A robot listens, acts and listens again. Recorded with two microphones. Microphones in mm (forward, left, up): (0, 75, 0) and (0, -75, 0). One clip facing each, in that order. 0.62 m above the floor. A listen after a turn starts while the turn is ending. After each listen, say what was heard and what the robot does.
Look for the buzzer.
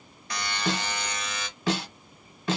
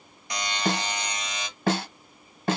The buzzer: about 15° right or 165° right. Turn 15° right.
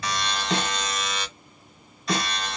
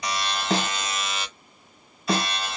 Facing the buzzer.